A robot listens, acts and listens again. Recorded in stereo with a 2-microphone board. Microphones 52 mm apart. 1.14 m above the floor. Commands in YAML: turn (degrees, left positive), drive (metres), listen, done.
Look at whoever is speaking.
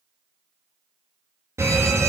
listen: true
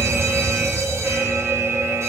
listen: true
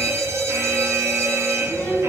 turn: 15
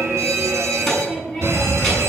done: "Found it: a child speaking, straight ahead, over 4 m away."